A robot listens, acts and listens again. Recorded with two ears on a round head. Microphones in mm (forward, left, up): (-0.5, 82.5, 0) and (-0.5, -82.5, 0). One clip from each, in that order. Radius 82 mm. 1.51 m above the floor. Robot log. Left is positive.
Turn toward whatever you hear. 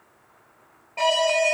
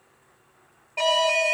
note: The alarm: about 25° right or 155° right.
cmd yaw -25
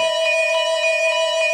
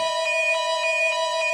end: Facing the alarm.